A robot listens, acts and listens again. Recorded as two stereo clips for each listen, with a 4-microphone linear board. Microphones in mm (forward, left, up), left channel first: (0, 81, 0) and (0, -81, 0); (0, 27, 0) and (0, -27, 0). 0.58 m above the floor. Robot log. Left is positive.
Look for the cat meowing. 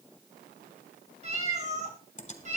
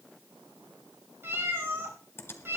note: The cat meowing: about 45° right or 135° right.
cmd yaw -45
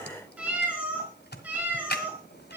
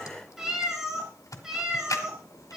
note: So it is at 10° right.
cmd yaw -10
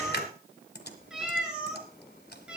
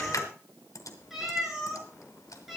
end: Facing the cat meowing.